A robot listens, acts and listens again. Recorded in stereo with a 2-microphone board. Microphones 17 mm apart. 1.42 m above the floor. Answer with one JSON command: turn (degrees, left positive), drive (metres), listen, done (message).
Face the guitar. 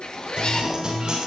{"turn": -45}
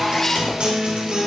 {"turn": -85}
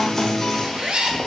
{"turn": 10}
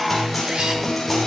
{"done": "Found it: a guitar, straight ahead, over 4 m away."}